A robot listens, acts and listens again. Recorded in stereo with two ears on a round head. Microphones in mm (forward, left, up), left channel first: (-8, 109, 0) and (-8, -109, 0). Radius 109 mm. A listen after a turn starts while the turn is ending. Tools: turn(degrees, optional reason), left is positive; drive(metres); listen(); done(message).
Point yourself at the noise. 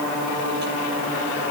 listen()
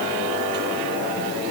listen()
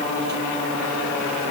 done("I can't make out anything.")